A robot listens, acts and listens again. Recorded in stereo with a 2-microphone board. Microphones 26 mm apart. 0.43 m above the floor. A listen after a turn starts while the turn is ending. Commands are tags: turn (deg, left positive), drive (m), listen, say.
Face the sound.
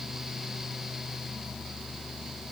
<listen/>
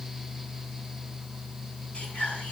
<turn deg="55"/>
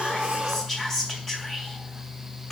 <turn deg="20"/>
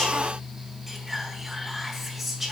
<say>Facing the whispering.</say>